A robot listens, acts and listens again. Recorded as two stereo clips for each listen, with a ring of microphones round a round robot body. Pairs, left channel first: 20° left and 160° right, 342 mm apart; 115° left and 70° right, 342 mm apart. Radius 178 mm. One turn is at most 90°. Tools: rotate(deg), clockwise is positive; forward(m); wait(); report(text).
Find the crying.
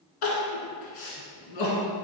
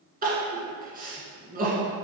report("Facing the crying, 1 to 2 m away.")